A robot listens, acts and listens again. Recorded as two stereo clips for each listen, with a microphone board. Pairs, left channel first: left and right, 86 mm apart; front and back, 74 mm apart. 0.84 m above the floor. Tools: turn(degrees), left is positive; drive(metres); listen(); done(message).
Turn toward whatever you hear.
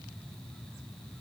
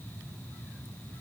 listen()
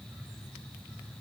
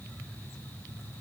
listen()
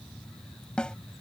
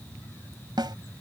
turn(degrees=170)
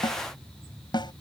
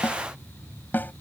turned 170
turn(degrees=60)
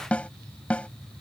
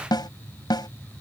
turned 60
turn(degrees=15)
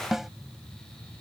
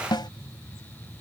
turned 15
done("Found it: a snare drum, straight ahead.")